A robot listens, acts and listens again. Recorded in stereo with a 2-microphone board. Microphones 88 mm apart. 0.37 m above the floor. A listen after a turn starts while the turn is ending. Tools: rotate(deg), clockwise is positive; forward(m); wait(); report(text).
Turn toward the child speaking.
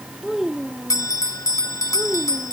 rotate(-30)
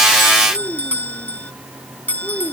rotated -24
rotate(-155)
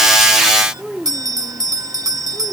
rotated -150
report("Found it: a child speaking, straight ahead.")